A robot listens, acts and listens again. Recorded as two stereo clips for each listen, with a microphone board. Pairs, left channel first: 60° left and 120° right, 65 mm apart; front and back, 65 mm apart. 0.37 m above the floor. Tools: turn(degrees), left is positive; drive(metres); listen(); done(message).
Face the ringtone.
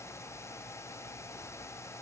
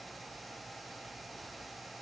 listen()
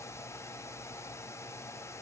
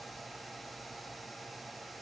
listen()
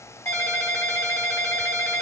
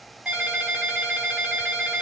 turn(degrees=105)
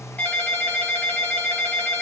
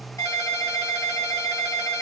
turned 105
done("Facing the ringtone.")